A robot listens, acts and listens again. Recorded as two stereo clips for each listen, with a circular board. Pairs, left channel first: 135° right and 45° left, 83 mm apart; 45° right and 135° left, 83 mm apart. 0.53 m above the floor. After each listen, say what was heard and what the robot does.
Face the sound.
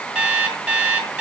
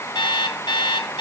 The alarm clock: 35° right. Turn 35° right.
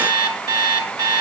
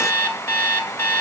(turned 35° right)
The alarm clock is now 15° left. Turn 15° left.
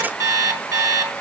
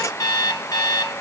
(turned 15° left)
Found it: an alarm clock, straight ahead.